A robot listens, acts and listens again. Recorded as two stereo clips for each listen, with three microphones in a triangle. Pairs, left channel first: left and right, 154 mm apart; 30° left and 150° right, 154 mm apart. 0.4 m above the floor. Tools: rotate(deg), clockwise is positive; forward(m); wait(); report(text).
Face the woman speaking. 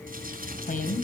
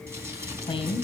rotate(-75)
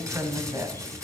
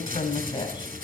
rotate(25)
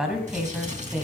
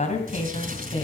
rotate(15)
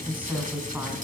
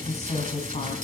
rotate(15)
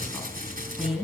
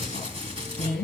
report("Facing the woman speaking.")